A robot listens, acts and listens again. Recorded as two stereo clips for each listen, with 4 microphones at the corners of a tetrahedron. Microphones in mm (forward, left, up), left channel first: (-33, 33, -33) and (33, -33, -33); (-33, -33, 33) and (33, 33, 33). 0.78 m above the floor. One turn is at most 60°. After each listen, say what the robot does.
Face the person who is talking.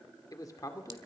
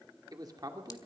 Turn 60° left.
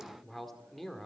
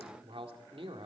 Turn 50° left.
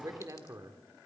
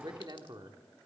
Found it: a man speaking, straight ahead.